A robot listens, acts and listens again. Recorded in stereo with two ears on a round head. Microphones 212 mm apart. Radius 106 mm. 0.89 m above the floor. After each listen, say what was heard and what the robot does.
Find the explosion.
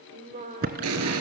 The explosion: about 75° right or 105° right. Turn 75° right.
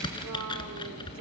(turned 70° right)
Keep listening.
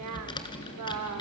I heard an explosion, but can't make it out now. It was about 5° right or 35° right.